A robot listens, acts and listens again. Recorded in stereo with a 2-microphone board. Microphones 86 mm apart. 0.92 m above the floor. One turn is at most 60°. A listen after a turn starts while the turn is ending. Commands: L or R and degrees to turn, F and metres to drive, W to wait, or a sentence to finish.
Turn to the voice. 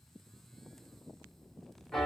W
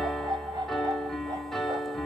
W
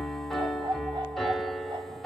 I can't make out anyone speaking, only a dog barking and a piano.